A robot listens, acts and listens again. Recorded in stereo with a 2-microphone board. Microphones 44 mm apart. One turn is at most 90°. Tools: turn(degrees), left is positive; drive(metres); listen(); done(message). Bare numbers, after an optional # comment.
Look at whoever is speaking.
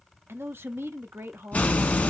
# The man speaking: about 60° right or 120° right.
turn(-60)
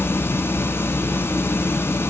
listen()
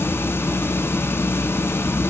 listen()
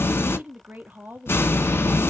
# So it is at 45° right.
turn(-45)
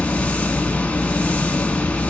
listen()
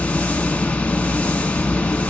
listen()
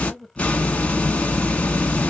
done("Found it: a man speaking, straight ahead.")